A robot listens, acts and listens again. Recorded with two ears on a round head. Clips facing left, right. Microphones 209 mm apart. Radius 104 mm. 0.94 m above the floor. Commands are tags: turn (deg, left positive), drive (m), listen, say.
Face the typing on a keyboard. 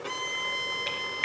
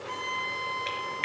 <turn deg="30"/>
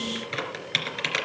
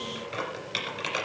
<turn deg="150"/>
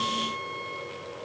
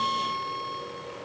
<listen/>
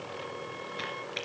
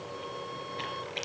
<turn deg="20"/>
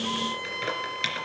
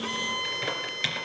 <say>Found it: typing on a keyboard, straight ahead, 2 to 4 m away.</say>